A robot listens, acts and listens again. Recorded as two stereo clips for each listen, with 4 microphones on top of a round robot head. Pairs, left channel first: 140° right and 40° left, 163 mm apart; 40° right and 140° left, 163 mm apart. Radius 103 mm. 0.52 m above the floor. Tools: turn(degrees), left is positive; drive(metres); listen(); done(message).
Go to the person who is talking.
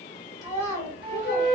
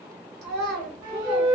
turn(degrees=150)
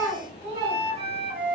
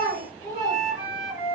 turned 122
turn(degrees=30)
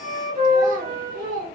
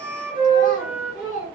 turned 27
drive(metres=1.0)
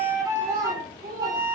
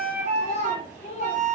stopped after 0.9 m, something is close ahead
done("Arrived at the child speaking, straight ahead.")